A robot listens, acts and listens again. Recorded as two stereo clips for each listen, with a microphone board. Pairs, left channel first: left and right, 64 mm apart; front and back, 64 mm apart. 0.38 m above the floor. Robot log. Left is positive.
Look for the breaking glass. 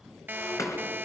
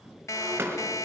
note: The breaking glass: 130° left.
cmd yaw +130
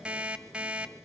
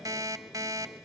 end: Facing where the breaking glass came from. I can't hear it now.